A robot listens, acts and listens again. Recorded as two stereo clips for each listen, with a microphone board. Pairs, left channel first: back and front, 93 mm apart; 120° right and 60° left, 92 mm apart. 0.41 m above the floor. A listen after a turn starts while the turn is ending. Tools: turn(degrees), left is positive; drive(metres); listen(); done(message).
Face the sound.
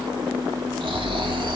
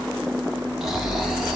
turn(degrees=-25)
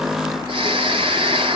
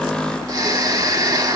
turn(degrees=10)
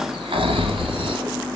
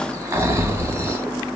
done("Found it: snoring, straight ahead.")